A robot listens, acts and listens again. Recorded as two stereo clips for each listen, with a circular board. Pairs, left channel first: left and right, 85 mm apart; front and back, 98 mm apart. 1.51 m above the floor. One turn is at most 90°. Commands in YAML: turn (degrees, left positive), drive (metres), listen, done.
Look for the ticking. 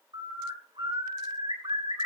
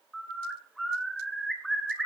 listen: true
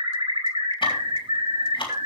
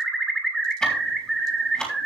turn: 85
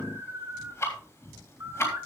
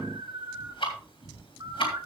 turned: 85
turn: 30
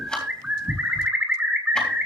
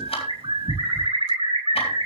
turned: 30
turn: 10
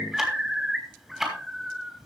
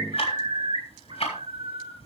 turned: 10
done: "Found it: ticking, straight ahead."